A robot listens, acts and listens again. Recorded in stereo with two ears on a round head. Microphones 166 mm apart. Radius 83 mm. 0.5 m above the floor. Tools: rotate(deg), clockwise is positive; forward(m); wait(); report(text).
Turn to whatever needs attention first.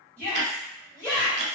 rotate(-30)
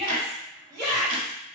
rotate(20)
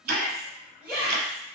rotate(10)
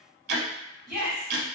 report("Facing the shout, 1 to 2 m away.")